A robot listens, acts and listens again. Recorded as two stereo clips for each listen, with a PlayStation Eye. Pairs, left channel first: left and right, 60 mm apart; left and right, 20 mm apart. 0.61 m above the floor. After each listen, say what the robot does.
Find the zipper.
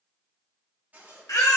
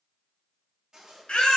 Turn 30° right.
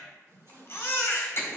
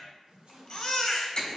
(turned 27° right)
Turn 120° right.
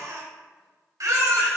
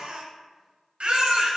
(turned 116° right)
Keep listening.
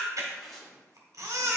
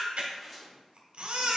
Facing the zipper.